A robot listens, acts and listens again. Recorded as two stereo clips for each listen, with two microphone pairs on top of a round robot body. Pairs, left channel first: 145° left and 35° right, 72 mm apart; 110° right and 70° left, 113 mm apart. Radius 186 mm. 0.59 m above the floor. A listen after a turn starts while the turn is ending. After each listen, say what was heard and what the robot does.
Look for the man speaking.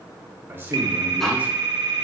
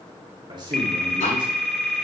The man speaking: 25° left. Turn 25° left.
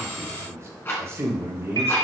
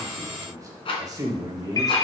The man speaking is now 20° left. Turn 20° left.
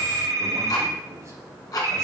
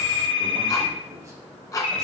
Keep listening.
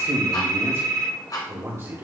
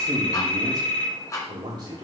The man speaking is now 20° left. Turn 20° left.
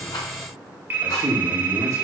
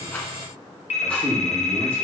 Found it: a man speaking, straight ahead.